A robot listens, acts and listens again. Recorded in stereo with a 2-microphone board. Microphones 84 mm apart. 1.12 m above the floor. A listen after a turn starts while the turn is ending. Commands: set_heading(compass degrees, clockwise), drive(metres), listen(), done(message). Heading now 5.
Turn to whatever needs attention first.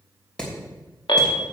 set_heading(275)
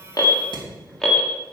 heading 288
done("Found it: an alarm, straight ahead.")